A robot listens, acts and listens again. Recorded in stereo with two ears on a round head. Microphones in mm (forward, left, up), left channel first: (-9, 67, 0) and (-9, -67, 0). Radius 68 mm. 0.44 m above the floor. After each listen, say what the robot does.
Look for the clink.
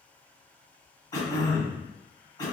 Keep listening.
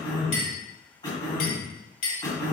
Turn 65° left.
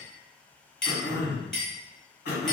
Facing the clink, 1 to 2 m away.